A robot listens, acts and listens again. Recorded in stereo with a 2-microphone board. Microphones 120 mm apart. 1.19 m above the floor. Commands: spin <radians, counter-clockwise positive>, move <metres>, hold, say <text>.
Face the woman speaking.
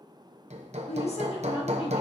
spin 0.87
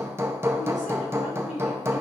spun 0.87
spin 1.40
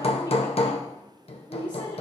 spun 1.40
spin 0.70
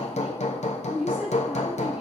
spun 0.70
spin -0.17
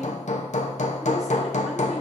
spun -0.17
hold
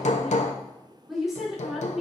say Found it: a woman speaking, straight ahead.